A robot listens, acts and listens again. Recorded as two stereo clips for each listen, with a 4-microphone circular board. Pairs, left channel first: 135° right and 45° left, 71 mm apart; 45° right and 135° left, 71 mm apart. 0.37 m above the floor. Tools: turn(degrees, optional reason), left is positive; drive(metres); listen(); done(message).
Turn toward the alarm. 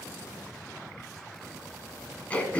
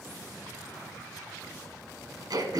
listen()
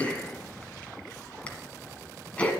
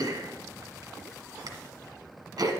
listen()
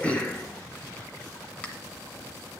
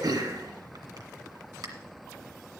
done("I can't make out an alarm, only throat clearing.")